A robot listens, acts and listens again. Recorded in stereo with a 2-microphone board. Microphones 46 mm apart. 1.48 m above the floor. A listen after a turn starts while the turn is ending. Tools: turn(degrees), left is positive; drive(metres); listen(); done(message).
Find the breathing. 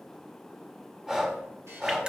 turn(degrees=-30)
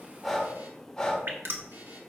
turn(degrees=15)
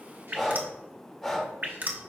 done("Facing the breathing.")